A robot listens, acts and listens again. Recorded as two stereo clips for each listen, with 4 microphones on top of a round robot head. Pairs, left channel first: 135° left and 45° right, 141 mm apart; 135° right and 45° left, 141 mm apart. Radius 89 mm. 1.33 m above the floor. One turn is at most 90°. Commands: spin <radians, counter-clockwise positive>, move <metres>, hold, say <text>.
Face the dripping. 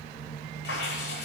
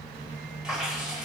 spin 1.57
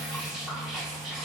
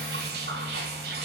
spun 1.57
spin 0.79
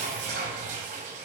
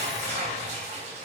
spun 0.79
say Found it: dripping, straight ahead, 1 to 2 m away.